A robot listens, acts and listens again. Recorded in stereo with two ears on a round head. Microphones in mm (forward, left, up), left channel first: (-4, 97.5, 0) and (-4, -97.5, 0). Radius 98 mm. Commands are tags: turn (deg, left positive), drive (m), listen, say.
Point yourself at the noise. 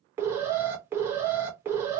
<turn deg="-30"/>
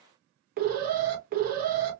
<turn deg="-140"/>
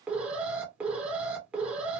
<say>Facing the alarm.</say>